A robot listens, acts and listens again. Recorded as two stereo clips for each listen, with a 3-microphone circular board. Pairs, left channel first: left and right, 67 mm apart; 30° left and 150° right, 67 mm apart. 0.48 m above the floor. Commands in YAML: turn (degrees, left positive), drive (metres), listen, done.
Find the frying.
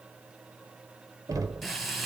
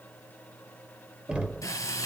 done: "Found it: frying, straight ahead, 2 to 4 m away."